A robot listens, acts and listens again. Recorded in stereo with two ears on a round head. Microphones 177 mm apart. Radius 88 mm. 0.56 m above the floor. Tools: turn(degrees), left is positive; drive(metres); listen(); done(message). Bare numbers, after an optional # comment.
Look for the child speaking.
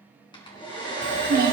# The child speaking: about 50° right or 130° right.
turn(-50)
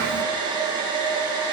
listen()
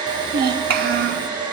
# So it is at 65° right.
turn(-65)
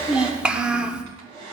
done("Found it: a child speaking, straight ahead, 1 to 2 m away.")